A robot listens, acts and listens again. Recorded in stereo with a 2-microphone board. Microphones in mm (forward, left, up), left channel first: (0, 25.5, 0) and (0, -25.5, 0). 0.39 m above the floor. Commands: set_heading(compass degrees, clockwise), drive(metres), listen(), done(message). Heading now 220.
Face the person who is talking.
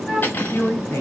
set_heading(155)
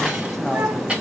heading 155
listen()
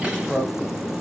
set_heading(145)
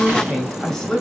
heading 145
done("Facing the man speaking.")